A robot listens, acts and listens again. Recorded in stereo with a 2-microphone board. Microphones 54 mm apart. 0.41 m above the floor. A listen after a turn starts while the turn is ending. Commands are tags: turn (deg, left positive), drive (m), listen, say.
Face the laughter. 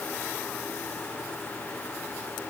<listen/>
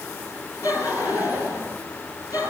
<turn deg="90"/>
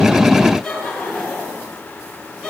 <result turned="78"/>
<say>Facing the laughter, over 4 m away.</say>